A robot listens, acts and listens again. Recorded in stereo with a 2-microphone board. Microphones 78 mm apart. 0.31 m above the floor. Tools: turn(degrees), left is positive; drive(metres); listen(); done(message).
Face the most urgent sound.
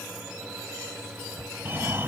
turn(degrees=-30)
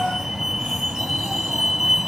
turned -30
done("Found it: a fire alarm, straight ahead.")